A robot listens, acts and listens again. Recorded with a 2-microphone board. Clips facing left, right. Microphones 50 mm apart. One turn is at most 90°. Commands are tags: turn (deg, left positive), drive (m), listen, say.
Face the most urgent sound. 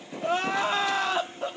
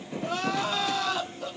<turn deg="30"/>
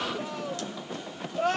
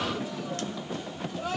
<turn deg="90"/>
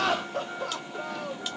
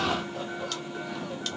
<turn deg="60"/>
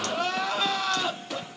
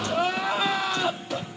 <turn deg="-15"/>
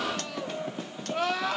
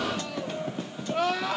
<say>Found it: crying, straight ahead, under 1 m away.</say>